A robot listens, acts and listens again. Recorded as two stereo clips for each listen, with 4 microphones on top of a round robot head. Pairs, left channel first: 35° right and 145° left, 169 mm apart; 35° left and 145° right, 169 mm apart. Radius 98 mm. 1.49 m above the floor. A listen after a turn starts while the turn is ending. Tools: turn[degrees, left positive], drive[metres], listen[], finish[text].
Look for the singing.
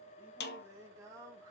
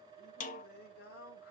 Thought: The singing: 70° left.
Action: turn[70]
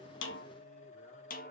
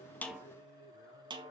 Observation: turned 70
Action: listen[]
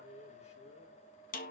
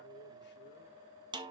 Thought: The singing is now 15° left.
Action: turn[15]
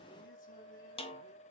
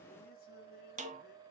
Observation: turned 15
Action: listen[]
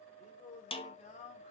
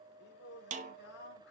Thought: The singing is now 15° left.
Action: turn[15]
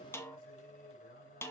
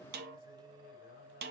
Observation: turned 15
Action: finish[Facing the singing.]